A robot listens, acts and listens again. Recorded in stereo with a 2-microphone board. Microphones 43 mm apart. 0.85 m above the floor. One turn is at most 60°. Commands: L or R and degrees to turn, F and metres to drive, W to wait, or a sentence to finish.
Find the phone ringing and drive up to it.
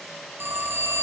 R60
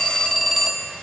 F1.0
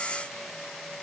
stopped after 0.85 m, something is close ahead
W
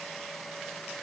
W
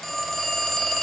Something is in my way. I am facing the phone ringing but have not reached it.